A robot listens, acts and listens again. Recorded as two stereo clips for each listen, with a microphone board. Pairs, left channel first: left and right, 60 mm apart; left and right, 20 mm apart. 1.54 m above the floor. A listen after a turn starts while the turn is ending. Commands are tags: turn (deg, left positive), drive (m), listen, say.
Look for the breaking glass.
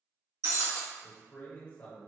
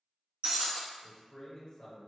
<turn deg="-60"/>
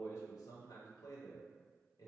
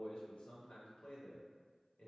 <listen/>
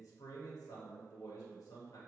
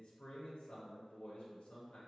<say>I heard breaking glass, but can't make it out now. It was about straight ahead or 60° right.</say>